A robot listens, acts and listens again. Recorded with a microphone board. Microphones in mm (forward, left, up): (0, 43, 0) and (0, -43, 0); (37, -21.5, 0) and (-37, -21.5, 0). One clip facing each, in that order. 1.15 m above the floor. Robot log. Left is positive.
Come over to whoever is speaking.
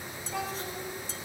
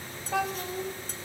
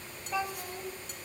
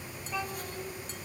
note: The child speaking: 80° right.
cmd yaw -80
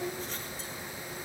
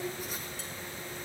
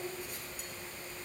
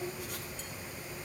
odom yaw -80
note: The child speaking is now 35° right.
cmd yaw -35
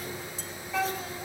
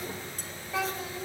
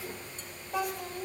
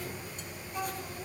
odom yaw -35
note: The child speaking is now 10° right.
cmd yaw -10
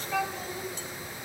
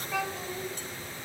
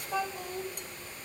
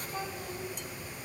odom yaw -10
cmd fwd 1.0
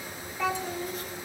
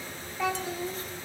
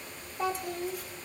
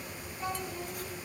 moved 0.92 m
cmd fwd 1.0
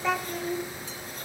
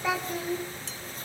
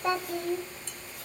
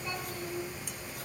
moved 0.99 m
cmd fwd 1.0
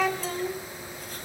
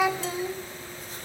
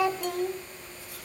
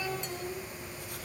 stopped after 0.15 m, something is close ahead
note: The child speaking is now 10° right.
cmd yaw -10
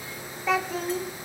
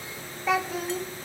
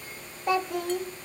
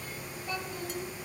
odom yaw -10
end: Arrived at the child speaking, straight ahead.